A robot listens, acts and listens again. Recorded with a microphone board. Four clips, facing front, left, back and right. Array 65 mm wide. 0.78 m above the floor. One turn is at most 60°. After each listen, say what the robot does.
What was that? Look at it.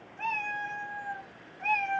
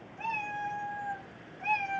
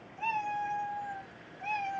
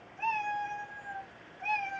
Facing the cat meowing.